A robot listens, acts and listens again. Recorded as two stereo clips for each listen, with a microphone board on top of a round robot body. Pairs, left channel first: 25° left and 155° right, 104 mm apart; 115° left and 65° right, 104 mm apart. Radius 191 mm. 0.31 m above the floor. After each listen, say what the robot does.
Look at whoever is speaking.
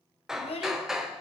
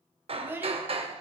Facing the child speaking.